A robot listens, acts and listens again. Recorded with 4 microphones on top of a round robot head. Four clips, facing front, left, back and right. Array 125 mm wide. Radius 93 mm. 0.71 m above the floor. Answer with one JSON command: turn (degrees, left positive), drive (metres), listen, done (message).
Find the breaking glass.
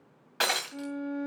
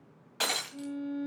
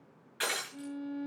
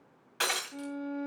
{"turn": 15}
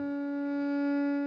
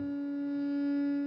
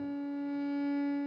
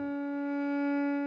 {"done": "I heard breaking glass from this way, but can't make it out now."}